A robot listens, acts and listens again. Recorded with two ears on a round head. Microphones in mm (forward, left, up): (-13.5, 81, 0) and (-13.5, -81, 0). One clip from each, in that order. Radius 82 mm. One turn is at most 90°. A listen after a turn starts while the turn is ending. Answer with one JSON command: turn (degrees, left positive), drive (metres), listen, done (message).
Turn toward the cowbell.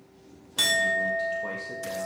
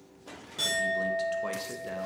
{"listen": true}
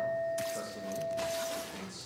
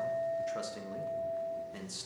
{"listen": true}
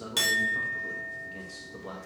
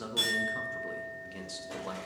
{"done": "I can't make out a cowbell, only a clink and a man speaking."}